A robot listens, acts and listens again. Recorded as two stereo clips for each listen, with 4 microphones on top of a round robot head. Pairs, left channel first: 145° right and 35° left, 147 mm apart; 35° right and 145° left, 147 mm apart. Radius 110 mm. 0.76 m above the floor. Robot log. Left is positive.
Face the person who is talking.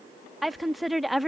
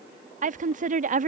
note: The woman speaking: 125° left.
cmd yaw +125
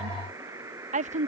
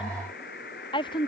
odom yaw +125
note: The woman speaking is now 15° left.
cmd yaw +15
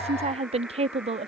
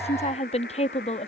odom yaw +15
end: Facing the woman speaking.